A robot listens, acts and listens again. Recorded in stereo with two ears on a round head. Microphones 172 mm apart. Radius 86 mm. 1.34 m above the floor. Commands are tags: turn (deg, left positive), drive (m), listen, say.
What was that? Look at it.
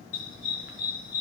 <turn deg="70"/>
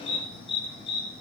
<turn deg="25"/>
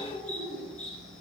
<say>Facing the dog barking.</say>